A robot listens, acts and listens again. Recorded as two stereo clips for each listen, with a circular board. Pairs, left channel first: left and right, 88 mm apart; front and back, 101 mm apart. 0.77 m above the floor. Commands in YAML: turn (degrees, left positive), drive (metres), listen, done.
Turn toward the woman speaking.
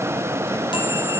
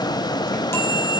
listen: true
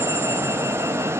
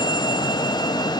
listen: true
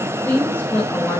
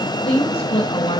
turn: 25
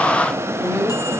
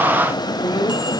turn: 10
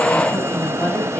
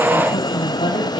listen: true
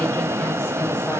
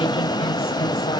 listen: true
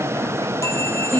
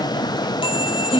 turn: 15
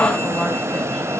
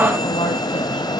listen: true
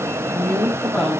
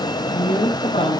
done: "Found it: a woman speaking, straight ahead."